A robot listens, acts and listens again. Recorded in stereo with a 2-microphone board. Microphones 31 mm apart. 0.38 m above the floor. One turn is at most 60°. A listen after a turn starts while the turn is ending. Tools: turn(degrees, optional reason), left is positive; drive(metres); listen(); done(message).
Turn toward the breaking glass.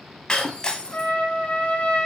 turn(degrees=25, reason="The breaking glass: about 25° left or 155° left.")
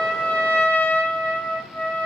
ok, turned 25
listen()
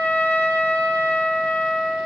done("I heard breaking glass, but can't make it out now. It was about straight ahead or 130° left.")